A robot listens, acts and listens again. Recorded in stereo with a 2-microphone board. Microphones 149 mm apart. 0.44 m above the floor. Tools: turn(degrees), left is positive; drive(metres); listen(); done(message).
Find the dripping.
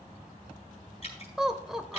turn(degrees=50)
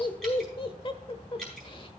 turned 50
done("Facing the dripping.")